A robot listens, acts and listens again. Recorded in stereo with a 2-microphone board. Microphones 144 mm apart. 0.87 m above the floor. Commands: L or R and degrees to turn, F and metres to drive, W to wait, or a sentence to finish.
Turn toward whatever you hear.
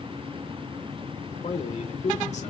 L50
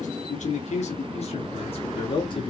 L35
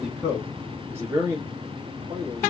R25
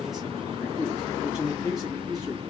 Found it: a man speaking, straight ahead.